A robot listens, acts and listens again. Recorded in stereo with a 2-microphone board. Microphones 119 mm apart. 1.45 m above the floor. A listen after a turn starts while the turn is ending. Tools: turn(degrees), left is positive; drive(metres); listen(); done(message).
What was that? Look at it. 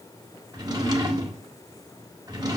turn(degrees=-35)
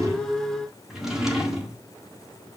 done("Found it: a drawer, straight ahead, 1 to 2 m away.")